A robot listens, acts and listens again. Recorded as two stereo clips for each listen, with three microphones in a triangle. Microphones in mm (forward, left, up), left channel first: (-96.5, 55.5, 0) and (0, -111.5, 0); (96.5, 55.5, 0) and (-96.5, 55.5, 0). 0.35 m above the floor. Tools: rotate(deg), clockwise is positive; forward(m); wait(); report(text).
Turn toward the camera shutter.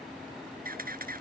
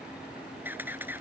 rotate(100)
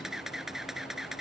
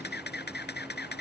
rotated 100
rotate(-30)
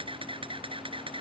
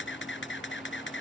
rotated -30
report("Found it: a camera shutter, straight ahead.")